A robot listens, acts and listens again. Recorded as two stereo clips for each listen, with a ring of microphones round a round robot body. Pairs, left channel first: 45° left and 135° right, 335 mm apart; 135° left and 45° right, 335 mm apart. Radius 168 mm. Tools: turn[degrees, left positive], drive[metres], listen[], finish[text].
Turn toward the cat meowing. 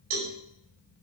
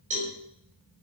Action: listen[]
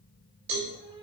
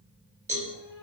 Thought: The cat meowing: 150° left.
Action: turn[150]
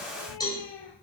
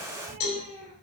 Thought: The cat meowing is now 25° left.
Action: turn[25]
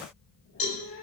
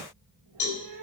Thought: The cat meowing is now 10° right.
Action: turn[-10]
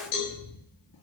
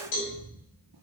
Action: finish[Found it: a cat meowing, straight ahead.]